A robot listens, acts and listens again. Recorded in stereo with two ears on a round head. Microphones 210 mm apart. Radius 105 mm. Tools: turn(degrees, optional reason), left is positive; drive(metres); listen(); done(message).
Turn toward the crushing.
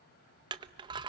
turn(degrees=-20, reason="The crushing: about 20° right or 160° right.")
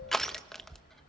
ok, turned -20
done("Facing the crushing.")